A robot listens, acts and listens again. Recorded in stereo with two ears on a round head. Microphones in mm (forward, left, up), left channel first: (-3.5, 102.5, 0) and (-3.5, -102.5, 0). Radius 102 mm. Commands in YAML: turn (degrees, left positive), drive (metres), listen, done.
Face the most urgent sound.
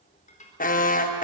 turn: 35
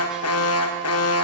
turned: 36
turn: 110
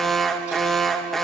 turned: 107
done: "Found it: an alarm, straight ahead."